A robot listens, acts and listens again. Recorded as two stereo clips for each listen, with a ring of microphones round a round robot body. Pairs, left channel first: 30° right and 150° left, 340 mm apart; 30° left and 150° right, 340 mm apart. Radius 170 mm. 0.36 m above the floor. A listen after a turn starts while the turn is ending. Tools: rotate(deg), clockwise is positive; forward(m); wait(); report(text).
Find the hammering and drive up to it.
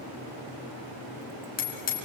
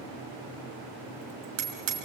rotate(95)
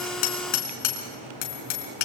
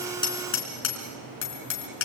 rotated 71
rotate(25)
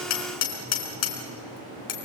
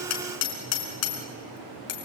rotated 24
forward(1.0)
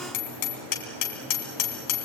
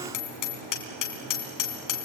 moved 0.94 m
forward(1.0)
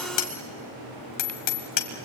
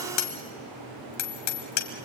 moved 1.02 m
rotate(10)
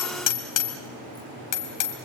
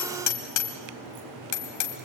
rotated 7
forward(1.0)
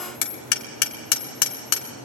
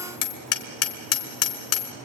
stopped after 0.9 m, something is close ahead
report("Arrived at the hammering, straight ahead.")